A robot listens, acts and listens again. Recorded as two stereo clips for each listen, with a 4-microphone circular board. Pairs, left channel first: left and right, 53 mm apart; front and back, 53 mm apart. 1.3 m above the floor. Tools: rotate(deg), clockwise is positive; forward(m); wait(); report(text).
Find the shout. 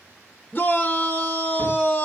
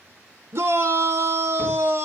rotate(-150)
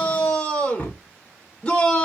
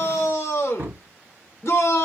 rotate(-30)
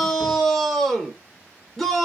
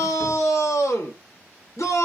rotate(-10)
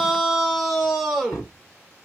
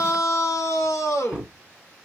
report("Found it: a shout, straight ahead, under 1 m away.")